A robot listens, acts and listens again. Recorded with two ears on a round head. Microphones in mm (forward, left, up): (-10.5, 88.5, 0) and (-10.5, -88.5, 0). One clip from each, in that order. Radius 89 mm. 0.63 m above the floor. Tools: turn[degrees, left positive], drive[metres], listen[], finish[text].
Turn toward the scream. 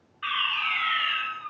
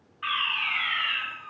Thought: The scream: about 50° left or 130° left.
Action: turn[50]
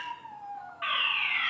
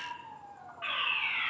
Thought: So it is at 75° left.
Action: turn[75]
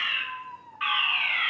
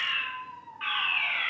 Action: finish[Found it: a scream, straight ahead, 1 to 2 m away.]